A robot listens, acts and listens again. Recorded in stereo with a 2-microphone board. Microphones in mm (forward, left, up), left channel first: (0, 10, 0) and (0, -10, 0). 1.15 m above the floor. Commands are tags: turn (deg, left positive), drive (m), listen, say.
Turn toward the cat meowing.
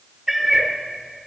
<turn deg="-15"/>
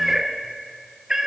<turn deg="-25"/>
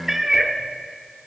<turn deg="-20"/>
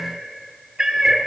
<turn deg="-30"/>
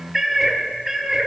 <turn deg="-30"/>
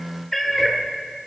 <turn deg="20"/>
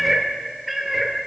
<say>Found it: a cat meowing, straight ahead, 1 to 2 m away.</say>